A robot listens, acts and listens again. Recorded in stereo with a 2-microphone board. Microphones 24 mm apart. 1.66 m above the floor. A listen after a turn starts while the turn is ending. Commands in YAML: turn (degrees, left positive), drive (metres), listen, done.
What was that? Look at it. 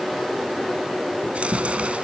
turn: -60
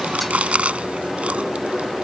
turn: -60
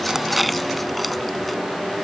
listen: true
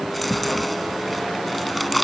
done: "Facing the chewing."